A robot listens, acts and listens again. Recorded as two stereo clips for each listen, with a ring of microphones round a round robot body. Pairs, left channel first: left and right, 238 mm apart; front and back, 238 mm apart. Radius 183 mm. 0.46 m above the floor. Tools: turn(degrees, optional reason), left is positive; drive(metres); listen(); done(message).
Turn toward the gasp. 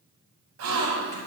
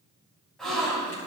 turn(degrees=-90, reason="The gasp: 90° right.")
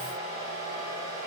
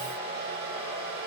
done("I heard a gasp from this way, but can't make it out now.")